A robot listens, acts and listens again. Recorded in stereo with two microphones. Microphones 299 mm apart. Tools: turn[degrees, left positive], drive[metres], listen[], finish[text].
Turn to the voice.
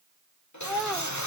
Action: turn[30]
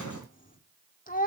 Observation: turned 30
Thought: So it is at 150° left.
Action: turn[150]
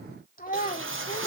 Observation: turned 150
Thought: The child speaking is now 30° left.
Action: turn[30]
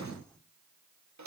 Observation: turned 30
Action: listen[]
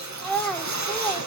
Action: finish[Found it: a child speaking, straight ahead, 2 to 4 m away.]